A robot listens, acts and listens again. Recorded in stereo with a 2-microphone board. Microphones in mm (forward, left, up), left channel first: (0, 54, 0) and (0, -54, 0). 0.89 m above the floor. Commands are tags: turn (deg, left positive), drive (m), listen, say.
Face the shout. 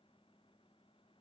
<listen/>
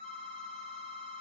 <listen/>
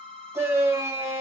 <turn deg="-25"/>
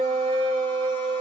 <turn deg="-125"/>
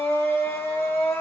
<turn deg="25"/>
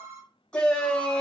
<turn deg="10"/>
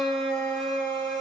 <say>Found it: a shout, straight ahead.</say>